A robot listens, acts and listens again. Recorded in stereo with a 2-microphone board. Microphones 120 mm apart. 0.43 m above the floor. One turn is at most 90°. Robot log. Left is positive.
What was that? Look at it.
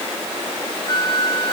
note: The flute: about 35° left or 145° left.
cmd yaw +35
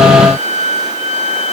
note: So it is at 110° left.
cmd yaw +90
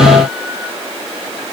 note: Nothing new. It was at 20° left.
cmd yaw +20
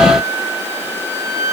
note: The flute is now 25° right.
cmd yaw -25
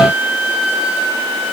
note: The flute is now 10° right.
cmd yaw -10
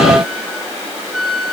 end: Facing the flute.